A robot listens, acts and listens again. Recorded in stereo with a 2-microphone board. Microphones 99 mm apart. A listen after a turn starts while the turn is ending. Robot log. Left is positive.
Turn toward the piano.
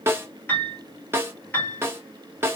note: The piano: about 20° left or 160° left.
cmd yaw +20
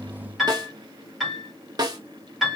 end: Found it: a piano, straight ahead.